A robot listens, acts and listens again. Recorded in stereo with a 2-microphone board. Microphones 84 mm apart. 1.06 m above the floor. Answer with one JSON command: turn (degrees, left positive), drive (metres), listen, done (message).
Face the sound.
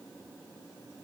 {"listen": true}
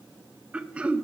{"turn": -30}
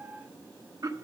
{"turn": -135}
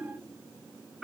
{"done": "Found it: throat clearing, straight ahead, under 1 m away."}